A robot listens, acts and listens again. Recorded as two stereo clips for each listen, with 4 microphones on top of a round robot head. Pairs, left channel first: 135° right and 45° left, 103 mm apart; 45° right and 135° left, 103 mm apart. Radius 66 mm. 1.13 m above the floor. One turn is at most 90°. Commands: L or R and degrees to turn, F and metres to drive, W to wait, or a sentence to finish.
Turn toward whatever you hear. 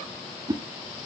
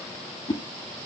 Found it: a whoosh, straight ahead.